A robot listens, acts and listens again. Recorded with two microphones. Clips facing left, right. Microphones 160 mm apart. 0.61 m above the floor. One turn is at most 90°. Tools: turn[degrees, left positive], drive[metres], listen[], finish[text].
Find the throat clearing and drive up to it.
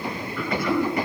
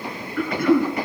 Thought: The throat clearing: about 55° right or 125° right.
Action: turn[-55]
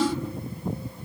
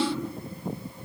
Action: drive[1.0]
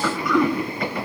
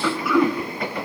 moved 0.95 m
Action: drive[1.0]
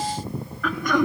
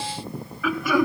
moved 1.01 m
Action: drive[1.0]
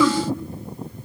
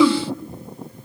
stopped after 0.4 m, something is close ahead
Thought: The throat clearing is now 15° right.
Action: turn[-15]
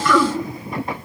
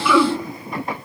Action: finish[I am next to the throat clearing.]